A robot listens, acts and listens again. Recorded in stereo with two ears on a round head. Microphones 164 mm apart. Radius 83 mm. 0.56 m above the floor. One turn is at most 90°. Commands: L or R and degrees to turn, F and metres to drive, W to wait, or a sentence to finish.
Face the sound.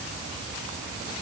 W
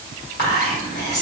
L55
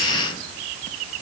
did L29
W
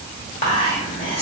L45
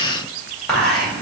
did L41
Facing the whispering.